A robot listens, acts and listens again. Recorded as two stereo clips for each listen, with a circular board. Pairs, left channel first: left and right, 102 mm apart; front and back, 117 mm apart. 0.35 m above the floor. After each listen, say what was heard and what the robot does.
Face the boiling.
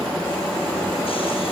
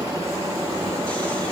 Keep listening.
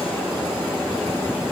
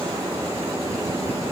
Keep listening.
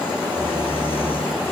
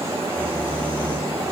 I can't make out boiling, only snoring.